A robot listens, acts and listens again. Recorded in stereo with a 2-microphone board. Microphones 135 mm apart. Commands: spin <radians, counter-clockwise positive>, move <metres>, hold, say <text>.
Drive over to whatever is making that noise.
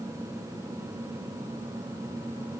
hold
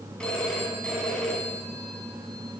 spin 0.52
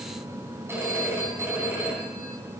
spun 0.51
spin -0.35
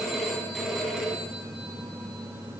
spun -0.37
move 1.0
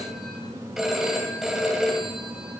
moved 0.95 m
move 1.0
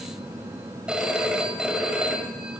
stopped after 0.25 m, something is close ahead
spin -0.17
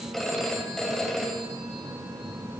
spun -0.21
say I am next to the phone ringing.